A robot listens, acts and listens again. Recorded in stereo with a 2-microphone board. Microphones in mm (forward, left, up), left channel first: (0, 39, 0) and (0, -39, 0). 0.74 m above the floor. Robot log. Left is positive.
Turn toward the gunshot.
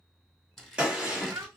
cmd yaw -30
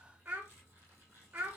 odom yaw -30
cmd idle
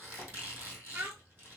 end: I heard a gunshot, but can't make it out now. It was about 15° left or 135° right.